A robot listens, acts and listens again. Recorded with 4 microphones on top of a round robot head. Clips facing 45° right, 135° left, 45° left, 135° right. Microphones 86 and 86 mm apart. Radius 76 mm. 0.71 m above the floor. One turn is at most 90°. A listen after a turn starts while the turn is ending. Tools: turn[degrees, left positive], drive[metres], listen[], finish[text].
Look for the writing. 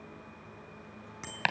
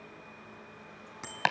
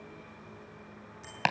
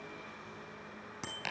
Action: listen[]
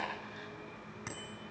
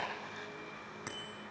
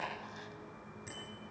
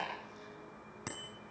Action: listen[]
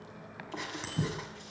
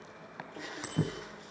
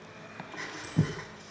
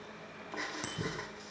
Thought: The writing: 50° right.
Action: turn[-50]
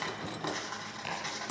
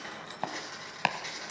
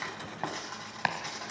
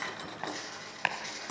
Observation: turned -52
Action: finish[Found it: writing, straight ahead.]